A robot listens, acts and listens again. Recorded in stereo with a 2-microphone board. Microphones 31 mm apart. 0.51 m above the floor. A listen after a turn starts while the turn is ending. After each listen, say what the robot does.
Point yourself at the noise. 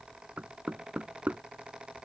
Turn 55° right.
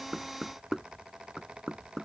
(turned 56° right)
Found it: knocking, straight ahead.